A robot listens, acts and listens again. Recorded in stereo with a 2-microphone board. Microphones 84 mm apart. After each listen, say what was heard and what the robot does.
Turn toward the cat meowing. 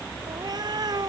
The cat meowing: about 55° right or 125° right. Turn 55° right.
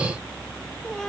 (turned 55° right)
Keep listening.
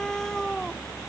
Facing the cat meowing.